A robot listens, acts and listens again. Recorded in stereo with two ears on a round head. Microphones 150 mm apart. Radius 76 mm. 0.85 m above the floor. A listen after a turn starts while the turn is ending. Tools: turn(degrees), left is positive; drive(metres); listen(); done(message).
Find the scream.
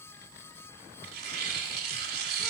listen()
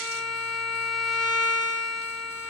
listen()
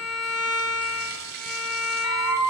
turn(degrees=-20)
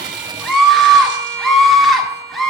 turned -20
done("Facing the scream.")